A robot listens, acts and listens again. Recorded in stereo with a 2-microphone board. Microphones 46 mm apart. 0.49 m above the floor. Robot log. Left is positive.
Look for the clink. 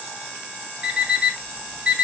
cmd idle
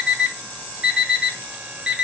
cmd idle
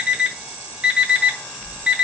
end: I can't make out a clink to turn to.